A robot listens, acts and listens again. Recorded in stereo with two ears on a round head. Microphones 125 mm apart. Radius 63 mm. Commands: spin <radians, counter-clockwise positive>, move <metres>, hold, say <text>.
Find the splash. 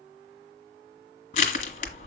hold
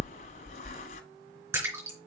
spin -0.26
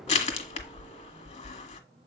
hold
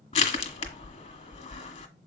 say I heard a splash, but can't make it out now. It was about straight ahead or 150° right.